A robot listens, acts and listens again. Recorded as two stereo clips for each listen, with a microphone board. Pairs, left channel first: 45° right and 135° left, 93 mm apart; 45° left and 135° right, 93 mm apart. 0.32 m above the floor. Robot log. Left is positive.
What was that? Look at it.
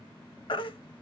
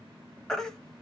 note: The baby crying: 40° right.
cmd yaw -40
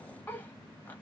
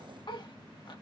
note: The baby crying is now 25° left.
cmd yaw +25
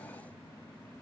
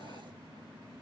cmd idle
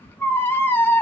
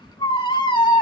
note: The baby crying is now 20° left.
cmd yaw +20
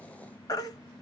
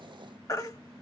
end: Found it: a baby crying, straight ahead.